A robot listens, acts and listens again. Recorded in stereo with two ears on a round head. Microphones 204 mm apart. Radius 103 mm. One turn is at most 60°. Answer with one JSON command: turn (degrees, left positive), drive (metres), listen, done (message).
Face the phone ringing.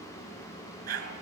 {"listen": true}
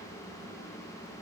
{"listen": true}
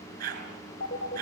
{"turn": 40}
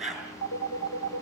{"turn": 60}
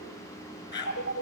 {"turn": 50}
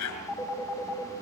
{"turn": 10}
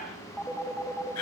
{"done": "Found it: a phone ringing, straight ahead, over 4 m away."}